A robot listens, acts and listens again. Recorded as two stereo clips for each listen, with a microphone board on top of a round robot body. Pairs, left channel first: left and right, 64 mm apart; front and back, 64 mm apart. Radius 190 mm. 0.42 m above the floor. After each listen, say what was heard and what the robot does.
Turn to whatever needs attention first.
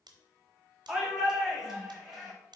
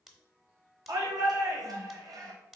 The shout: 175° right. Turn 175° right.
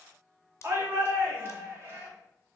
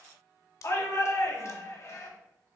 The shout is now 40° right. Turn 40° right.
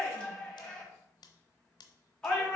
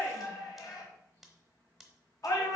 The shout is now 10° left. Turn 10° left.
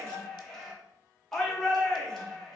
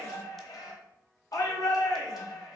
Found it: a shout, straight ahead, 2 to 4 m away.